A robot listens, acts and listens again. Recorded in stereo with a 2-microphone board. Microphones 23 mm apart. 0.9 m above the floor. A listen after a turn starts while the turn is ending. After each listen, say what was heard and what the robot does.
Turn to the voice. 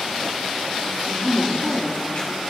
The woman speaking: about 50° right or 130° right. Turn 50° right.
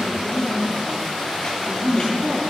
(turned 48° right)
So it is at 80° right. Turn 80° right.
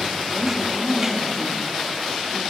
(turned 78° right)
Found it: a woman speaking, straight ahead.